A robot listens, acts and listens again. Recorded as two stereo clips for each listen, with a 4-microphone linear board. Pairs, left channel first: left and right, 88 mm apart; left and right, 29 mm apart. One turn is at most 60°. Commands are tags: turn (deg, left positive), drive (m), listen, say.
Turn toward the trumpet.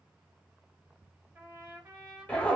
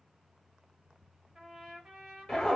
<turn deg="-25"/>
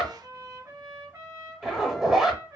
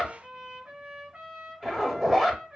<turn deg="-60"/>
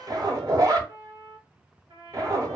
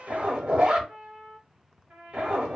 <turn deg="-60"/>
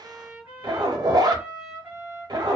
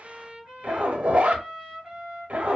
<turn deg="-20"/>
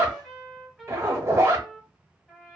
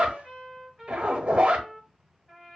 <say>Found it: a trumpet, straight ahead.</say>